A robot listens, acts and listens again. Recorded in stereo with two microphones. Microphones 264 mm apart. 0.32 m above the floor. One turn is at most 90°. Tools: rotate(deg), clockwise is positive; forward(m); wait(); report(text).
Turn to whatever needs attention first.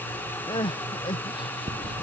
rotate(-20)
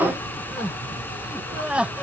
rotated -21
report("Found it: crying, straight ahead.")